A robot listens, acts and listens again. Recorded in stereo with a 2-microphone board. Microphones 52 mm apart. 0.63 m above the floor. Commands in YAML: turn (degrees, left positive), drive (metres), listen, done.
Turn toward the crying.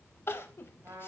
turn: 50
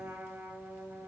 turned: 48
listen: true
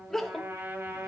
done: "Facing the crying."